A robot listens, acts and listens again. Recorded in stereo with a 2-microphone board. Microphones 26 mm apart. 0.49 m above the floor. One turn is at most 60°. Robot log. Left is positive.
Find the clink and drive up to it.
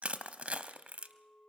note: The clink: about 35° left or 145° left.
cmd yaw +35
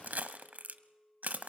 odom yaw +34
note: So it is at 110° left.
cmd yaw +60
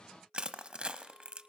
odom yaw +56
note: The clink is now 55° left.
cmd yaw +55
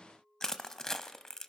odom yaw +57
cmd fwd 1.0
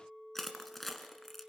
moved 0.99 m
cmd fwd 1.0
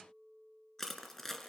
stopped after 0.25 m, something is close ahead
end: I am next to the clink.